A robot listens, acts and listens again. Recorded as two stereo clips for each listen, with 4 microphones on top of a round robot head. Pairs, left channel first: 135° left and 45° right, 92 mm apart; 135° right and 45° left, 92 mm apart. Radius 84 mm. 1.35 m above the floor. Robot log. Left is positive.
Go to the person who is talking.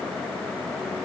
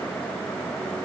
cmd idle
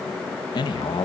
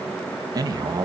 note: The man speaking: 95° left.
cmd yaw +95
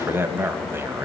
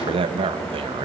note: The man speaking is now 20° left.
cmd yaw +20
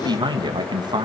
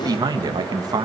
cmd fwd 1.0
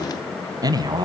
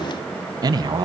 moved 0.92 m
cmd fwd 1.0
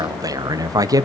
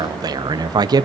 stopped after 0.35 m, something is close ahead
end: I am next to the man speaking.